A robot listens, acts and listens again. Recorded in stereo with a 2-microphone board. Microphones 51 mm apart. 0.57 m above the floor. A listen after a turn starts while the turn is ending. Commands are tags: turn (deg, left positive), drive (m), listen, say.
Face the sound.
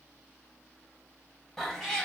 <turn deg="30"/>
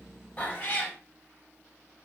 <turn deg="140"/>
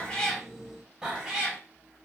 <turn deg="-15"/>
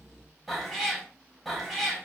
<say>Found it: a cat meowing, straight ahead.</say>